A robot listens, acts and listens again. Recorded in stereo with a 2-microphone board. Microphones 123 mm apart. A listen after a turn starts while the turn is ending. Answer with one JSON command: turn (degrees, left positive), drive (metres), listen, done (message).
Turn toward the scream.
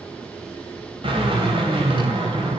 {"listen": true}
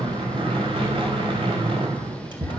{"listen": true}
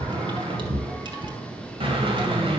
{"done": "I can't make out a scream, only a drill."}